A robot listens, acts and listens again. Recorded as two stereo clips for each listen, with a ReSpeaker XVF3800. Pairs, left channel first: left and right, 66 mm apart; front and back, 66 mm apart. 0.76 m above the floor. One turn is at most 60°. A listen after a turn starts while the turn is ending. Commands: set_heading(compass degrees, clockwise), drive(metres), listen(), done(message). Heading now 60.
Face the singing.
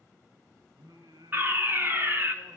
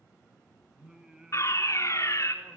set_heading(120)
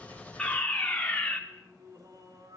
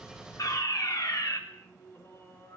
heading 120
set_heading(175)
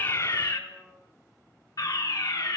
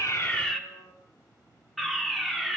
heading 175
set_heading(160)
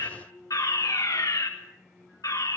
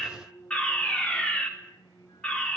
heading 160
done("Facing the singing.")